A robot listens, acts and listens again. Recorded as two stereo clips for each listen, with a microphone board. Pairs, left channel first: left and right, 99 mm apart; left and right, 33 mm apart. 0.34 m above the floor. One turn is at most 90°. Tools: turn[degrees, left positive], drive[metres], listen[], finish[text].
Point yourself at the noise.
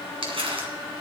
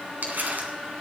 Thought: The crumpling: about 65° right or 115° right.
Action: turn[-65]
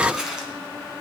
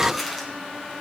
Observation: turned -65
Action: finish[Found it: crumpling, straight ahead.]